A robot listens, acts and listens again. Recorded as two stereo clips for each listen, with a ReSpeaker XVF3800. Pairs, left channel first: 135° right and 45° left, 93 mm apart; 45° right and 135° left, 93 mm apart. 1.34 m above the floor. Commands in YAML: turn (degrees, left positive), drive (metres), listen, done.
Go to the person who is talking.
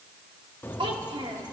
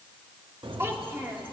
turn: 70
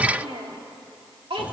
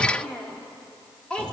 turn: 35
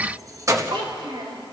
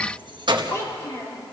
turn: 15
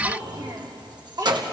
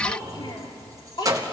drive: 1.0
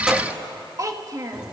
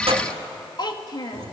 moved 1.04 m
drive: 1.0
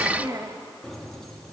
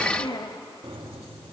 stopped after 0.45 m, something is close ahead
done: "I am next to the child speaking."